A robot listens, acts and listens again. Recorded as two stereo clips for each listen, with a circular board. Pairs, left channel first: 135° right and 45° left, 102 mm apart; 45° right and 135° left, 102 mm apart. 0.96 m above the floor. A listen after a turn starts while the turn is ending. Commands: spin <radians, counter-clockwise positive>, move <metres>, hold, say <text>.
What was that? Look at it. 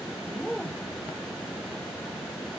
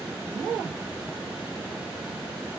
hold
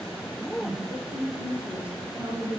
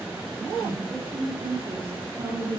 spin 2.18
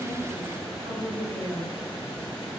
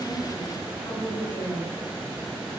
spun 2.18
spin 0.26
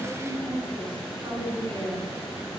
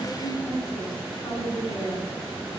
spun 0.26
say Facing the woman speaking.